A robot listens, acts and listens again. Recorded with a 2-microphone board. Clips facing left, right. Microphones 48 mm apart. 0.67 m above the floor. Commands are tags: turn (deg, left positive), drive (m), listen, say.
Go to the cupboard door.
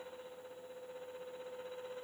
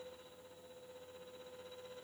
<listen/>
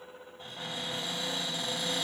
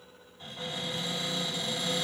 <turn deg="35"/>
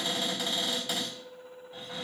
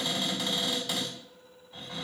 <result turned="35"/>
<drive m="1.0"/>
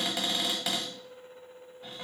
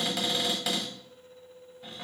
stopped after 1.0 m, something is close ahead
<say>Arrived at the cupboard door, straight ahead.</say>